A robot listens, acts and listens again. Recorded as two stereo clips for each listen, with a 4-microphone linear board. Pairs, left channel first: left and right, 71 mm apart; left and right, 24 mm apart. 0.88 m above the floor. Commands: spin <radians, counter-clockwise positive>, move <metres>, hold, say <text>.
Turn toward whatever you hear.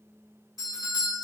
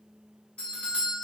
spin 0.96
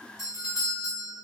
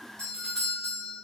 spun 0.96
spin 0.87
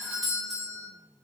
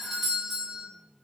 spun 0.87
say Found it: a doorbell, straight ahead, 1 to 2 m away.